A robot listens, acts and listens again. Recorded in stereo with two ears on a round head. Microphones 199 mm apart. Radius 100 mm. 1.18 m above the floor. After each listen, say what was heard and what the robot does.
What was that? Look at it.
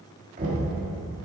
The knocking: about 35° right or 145° right. Turn 35° right.
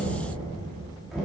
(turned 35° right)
Found it: knocking, straight ahead, 1 to 2 m away.